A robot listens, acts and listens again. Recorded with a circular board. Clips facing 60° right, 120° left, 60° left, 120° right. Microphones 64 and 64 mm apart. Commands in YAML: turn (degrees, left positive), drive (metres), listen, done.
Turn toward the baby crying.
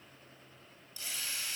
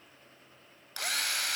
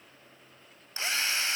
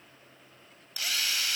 listen: true
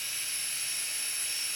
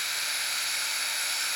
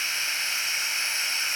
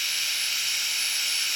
listen: true
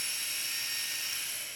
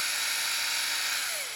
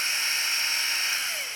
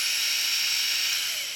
done: "I can't make out a baby crying, only a drill."